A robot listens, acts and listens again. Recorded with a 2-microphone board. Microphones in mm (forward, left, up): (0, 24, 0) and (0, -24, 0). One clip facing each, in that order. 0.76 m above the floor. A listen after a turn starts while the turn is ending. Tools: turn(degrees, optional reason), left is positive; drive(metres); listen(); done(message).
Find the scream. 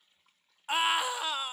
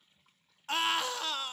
turn(degrees=15, reason="The scream: about 15° left or 165° left.")
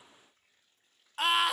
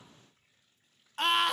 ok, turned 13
done("Facing the scream, under 1 m away.")